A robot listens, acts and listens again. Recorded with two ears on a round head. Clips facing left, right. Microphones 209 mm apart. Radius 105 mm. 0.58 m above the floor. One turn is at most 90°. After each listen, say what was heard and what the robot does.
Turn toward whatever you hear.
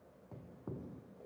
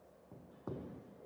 Keep listening.
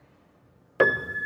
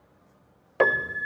The piano: about 15° left or 165° left. Turn 15° left.
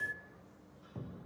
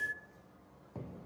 Found it: a piano, straight ahead, under 1 m away.